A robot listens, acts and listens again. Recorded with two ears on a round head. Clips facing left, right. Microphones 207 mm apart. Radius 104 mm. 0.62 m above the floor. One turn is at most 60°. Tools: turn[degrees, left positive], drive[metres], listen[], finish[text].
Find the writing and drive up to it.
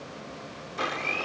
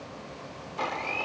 Action: listen[]
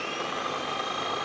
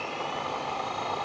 Action: listen[]
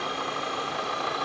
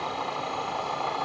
Action: finish[I can't make out writing to turn to.]